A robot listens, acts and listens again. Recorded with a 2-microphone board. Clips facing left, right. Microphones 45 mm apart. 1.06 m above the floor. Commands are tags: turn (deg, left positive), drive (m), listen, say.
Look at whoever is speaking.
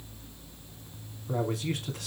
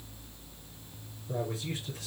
<turn deg="90"/>
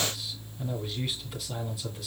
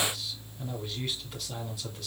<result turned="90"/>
<say>Facing the man speaking, 2 to 4 m away.</say>